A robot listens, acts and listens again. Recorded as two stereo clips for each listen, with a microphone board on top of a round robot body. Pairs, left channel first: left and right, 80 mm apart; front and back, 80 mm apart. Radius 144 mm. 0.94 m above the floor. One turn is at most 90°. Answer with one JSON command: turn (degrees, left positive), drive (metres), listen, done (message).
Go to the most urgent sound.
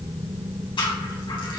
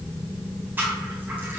{"listen": true}
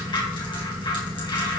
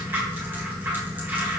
{"listen": true}
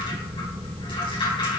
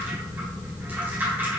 {"done": "I can't make out anything urgent to turn to."}